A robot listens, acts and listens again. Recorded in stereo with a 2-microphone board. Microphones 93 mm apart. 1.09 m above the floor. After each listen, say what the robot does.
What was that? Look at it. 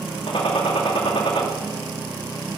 Turn 70° left.
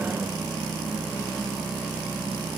Keep listening.
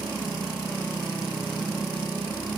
I heard a gunshot, but can't make it out now. It was about straight ahead or 40° left.